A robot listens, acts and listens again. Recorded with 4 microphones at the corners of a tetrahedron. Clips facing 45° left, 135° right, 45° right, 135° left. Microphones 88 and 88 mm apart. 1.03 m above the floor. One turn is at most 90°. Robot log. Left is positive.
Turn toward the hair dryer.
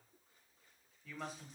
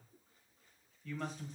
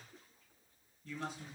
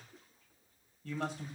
cmd idle
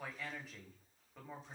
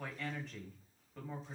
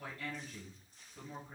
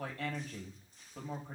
cmd idle
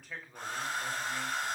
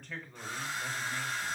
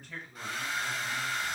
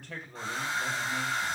note: The hair dryer: 75° left.
cmd yaw +75
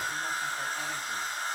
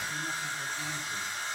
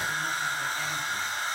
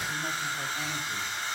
end: Facing the hair dryer.